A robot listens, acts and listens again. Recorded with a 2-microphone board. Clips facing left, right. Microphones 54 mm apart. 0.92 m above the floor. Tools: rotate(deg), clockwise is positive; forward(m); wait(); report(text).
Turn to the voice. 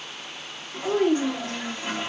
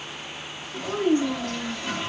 rotate(-90)
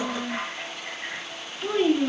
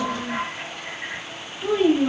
report("Found it: a child speaking, straight ahead, under 1 m away.")